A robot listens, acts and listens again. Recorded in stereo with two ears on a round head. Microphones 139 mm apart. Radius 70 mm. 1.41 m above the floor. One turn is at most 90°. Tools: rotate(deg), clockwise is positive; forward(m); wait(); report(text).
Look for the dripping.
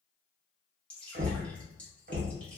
rotate(-30)
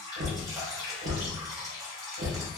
rotate(20)
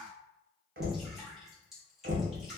report("Found it: dripping, straight ahead.")